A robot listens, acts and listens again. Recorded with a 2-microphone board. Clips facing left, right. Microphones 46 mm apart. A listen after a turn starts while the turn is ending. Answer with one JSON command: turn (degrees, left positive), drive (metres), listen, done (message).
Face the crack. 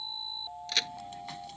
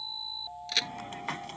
{"turn": 30}
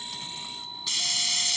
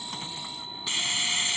{"listen": true}
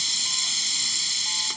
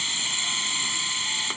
{"done": "I heard a crack, but can't make it out now. It was about 30° right or 150° left."}